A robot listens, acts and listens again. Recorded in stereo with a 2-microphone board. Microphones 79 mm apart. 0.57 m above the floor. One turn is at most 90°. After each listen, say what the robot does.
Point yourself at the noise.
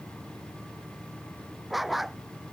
Turn 30° left.
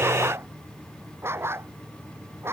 Turn 30° right.
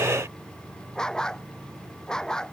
Turn 10° left.
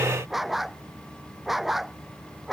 Found it: a dog barking, straight ahead.